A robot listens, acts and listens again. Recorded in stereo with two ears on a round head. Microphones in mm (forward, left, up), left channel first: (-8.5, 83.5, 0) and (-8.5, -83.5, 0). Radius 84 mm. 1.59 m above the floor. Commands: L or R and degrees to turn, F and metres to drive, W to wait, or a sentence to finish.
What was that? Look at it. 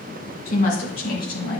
L55
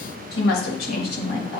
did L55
L55
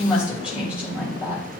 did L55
R10
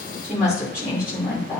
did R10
R10
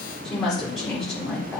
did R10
Found it: a woman speaking, straight ahead, 2 to 4 m away.